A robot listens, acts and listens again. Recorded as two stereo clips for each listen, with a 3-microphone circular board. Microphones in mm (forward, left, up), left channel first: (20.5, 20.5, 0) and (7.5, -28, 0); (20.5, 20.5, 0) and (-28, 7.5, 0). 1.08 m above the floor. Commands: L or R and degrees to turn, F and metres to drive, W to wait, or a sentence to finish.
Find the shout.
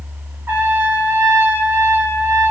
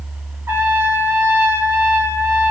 W
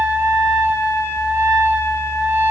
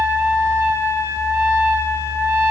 W
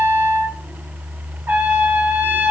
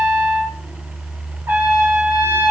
I can't make out a shout to turn to.